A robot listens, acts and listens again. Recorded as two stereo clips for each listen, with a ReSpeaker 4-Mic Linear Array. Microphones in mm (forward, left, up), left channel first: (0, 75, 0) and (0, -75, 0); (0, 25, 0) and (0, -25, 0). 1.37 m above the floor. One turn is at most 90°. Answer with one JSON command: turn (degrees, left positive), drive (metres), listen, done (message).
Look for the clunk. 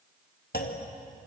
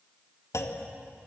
{"turn": 90}
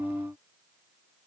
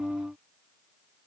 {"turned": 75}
{"turn": 15}
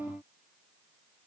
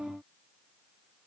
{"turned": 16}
{"done": "I heard a clunk from this way, but can't make it out now."}